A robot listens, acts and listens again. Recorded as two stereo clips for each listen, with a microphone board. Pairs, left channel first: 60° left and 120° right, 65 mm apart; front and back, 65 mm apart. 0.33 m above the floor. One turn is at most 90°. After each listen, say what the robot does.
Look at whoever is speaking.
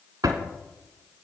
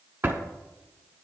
Keep listening.
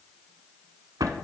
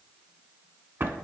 Keep listening.
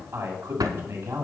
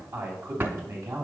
Turn 90° right.
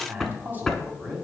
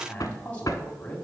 Turn 65° right.
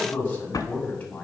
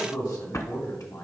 Found it: a man speaking, straight ahead, 2 to 4 m away.